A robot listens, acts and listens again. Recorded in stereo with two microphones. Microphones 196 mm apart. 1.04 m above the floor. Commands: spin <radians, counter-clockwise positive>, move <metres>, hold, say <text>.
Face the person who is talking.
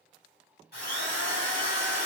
hold
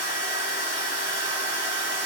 hold
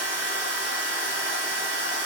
say I can't make out anyone speaking, only a drill.